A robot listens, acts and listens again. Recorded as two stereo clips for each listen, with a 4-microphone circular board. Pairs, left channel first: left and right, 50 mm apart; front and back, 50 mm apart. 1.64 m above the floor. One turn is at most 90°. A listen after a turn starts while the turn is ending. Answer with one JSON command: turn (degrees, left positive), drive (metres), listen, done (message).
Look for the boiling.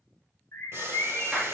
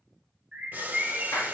{"turn": -90}
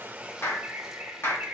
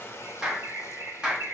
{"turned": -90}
{"turn": -35}
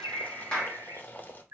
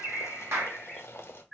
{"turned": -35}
{"turn": 40}
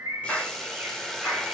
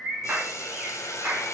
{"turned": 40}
{"done": "Found it: boiling, straight ahead, under 1 m away."}